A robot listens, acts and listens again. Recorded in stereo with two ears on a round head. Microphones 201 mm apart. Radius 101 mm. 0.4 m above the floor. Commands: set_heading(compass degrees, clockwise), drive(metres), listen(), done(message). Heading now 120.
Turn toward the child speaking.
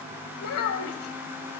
set_heading(55)
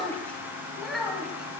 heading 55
done("Facing the child speaking.")